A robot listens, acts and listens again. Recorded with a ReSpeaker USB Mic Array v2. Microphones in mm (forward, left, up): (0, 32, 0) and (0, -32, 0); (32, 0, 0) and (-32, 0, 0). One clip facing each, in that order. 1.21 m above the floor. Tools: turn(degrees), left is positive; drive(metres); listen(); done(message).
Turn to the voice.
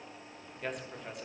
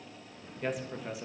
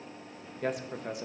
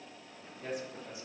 done("Facing the man speaking.")